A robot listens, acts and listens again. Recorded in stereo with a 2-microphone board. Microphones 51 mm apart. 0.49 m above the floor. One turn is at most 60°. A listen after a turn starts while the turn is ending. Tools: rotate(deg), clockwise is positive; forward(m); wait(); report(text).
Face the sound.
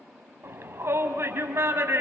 rotate(55)
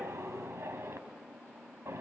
rotate(60)
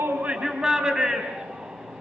rotate(15)
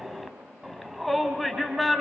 report("Found it: a shout, straight ahead.")